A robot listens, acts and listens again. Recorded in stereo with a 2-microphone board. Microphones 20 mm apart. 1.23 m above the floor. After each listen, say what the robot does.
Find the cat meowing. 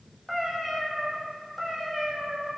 Turn 20° left.
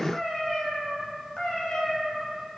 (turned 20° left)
Turn 130° left.
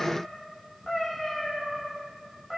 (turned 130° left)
Facing the cat meowing, 2 to 4 m away.